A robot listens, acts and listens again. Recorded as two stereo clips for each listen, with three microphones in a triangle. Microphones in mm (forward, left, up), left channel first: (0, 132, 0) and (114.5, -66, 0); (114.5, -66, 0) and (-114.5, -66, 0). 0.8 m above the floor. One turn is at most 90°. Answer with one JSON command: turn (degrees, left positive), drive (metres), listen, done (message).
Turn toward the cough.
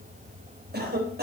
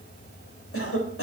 {"turn": -15}
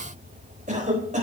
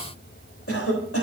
{"done": "Found it: a cough, straight ahead."}